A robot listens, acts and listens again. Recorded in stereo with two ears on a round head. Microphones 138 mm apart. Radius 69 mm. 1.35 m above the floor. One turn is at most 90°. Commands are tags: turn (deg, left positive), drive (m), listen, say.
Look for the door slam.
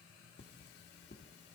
<listen/>
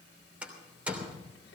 <turn deg="-30"/>
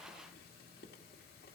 <listen/>
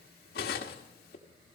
<say>I heard a door slam, but can't make it out now. It was about 20° left or 140° right.</say>